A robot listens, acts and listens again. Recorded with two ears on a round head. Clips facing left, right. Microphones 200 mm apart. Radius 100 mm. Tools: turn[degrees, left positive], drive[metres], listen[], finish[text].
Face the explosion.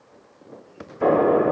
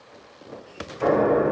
Thought: The explosion: about 55° left or 125° left.
Action: turn[55]
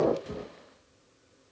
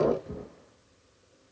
Action: finish[Found it: an explosion, straight ahead.]